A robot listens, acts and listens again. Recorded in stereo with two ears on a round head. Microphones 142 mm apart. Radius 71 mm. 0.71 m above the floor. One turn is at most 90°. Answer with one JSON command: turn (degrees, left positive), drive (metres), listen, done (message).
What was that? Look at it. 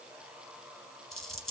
{"turn": 30}
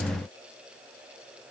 {"listen": true}
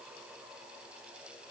{"done": "I heard a dropped coin, but can't make it out now. It was about 30° right or 150° left."}